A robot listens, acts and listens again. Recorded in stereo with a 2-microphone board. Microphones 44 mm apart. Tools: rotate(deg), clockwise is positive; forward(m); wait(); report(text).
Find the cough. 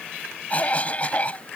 rotate(-30)
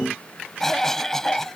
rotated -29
rotate(-10)
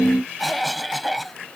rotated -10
report("Facing the cough.")